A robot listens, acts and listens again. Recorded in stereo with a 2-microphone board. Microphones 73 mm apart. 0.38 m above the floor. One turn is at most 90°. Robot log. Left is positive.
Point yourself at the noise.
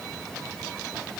cmd idle
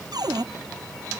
note: The cupboard door: about 65° right or 115° right.
cmd yaw -65
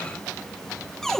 end: Found it: a cupboard door, straight ahead.